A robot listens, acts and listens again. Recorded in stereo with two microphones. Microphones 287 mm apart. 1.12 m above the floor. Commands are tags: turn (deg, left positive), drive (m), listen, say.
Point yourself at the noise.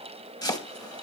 <turn deg="30"/>
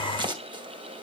<turn deg="-15"/>
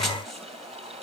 <listen/>
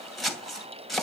<say>Found it: chopping, straight ahead, 2 to 4 m away.</say>